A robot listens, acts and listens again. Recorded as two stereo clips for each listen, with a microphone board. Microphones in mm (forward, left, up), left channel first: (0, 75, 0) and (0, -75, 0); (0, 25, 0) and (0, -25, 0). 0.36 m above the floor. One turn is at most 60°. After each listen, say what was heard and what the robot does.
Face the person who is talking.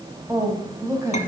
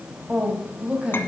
The woman speaking: about 20° right or 160° right. Turn 20° right.
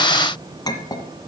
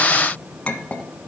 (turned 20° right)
Keep listening.
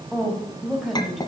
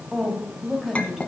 Facing the woman speaking, 2 to 4 m away.